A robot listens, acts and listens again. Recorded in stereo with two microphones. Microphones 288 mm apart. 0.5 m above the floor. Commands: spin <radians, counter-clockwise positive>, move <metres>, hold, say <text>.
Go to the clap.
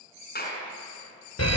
spin 0.52
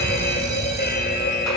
hold
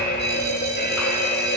hold
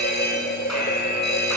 say I heard a clap, but can't make it out now. It was about straight ahead or 120° left. I did not reach it.